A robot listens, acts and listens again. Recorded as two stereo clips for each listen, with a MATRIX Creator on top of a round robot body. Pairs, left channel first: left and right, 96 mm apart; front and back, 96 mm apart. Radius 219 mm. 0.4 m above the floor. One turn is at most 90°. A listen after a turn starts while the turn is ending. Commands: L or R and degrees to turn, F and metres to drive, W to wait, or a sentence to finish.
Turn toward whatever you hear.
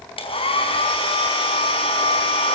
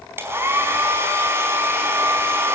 L90
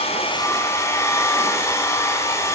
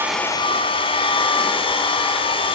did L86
L30
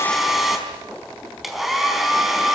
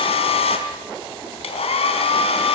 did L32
Facing the hair dryer.